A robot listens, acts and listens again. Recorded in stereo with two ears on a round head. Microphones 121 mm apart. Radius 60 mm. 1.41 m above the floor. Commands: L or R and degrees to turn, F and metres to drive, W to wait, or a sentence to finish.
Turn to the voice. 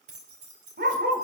W
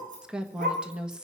R30
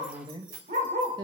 R145
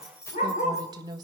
R30
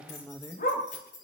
L10
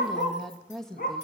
Found it: a woman speaking, straight ahead.